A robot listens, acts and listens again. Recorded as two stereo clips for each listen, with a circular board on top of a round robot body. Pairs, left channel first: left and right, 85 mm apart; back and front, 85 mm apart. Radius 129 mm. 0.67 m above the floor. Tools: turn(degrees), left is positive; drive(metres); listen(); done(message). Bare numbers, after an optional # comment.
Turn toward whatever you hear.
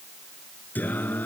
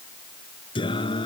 # The singing: 160° left.
turn(160)
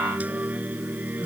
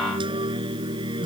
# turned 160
# The singing is now 20° right.
turn(-20)
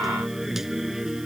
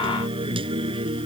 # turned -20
done("Facing the singing.")